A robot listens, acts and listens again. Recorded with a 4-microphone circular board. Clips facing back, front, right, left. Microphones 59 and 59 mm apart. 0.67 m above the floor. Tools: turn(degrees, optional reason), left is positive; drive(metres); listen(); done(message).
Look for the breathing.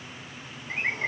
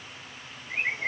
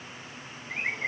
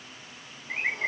listen()
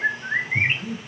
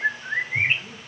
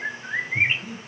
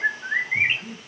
turn(degrees=175, reason="The breathing: 175° left.")
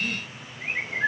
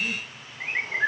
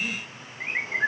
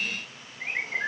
done("Facing the breathing, 1 to 2 m away.")